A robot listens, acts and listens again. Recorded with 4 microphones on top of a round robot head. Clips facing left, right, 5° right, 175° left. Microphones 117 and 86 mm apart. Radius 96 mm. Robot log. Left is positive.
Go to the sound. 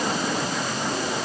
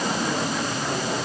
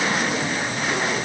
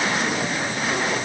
cmd idle
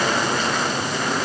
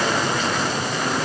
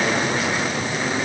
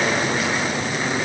cmd idle
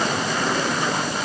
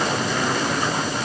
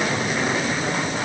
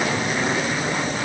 end: I can't make out anything.